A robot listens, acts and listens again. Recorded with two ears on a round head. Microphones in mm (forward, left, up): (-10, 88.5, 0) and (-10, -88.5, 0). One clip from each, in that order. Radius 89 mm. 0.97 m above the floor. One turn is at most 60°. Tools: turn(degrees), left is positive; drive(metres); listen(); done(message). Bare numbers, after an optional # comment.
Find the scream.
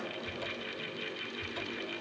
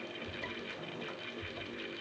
listen()
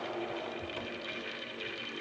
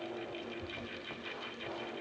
listen()
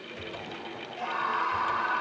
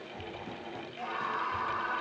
# The scream: about 15° left or 165° left.
turn(15)
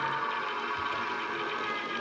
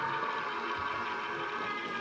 done("Found it: a scream, straight ahead.")